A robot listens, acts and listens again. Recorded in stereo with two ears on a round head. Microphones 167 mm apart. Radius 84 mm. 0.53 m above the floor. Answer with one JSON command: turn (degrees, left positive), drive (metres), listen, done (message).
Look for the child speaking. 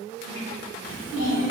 {"turn": 75}
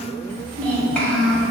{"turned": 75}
{"done": "Facing the child speaking."}